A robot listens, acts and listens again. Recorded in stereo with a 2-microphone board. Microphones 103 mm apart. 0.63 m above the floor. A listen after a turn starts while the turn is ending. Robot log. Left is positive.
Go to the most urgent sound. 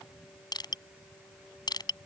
cmd idle
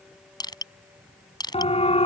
note: The siren: about 75° left or 105° left.
cmd yaw +75
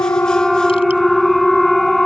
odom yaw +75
cmd fwd 1.0
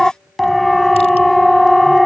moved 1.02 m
cmd fwd 1.0
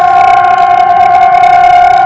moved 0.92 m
cmd fwd 1.0
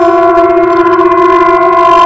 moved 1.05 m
cmd fwd 1.0
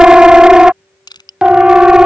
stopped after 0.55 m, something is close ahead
note: The siren is now 10° right.
cmd yaw -10
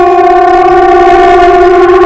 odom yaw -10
end: I am next to the siren.